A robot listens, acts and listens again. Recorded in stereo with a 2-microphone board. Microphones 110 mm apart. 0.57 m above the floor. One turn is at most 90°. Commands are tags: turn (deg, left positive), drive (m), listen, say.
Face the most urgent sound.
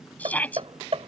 <turn deg="30"/>
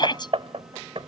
<turn deg="90"/>
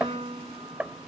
<turn deg="45"/>
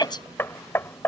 <turn deg="40"/>
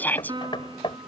<turn deg="15"/>
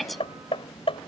<say>Facing the shout.</say>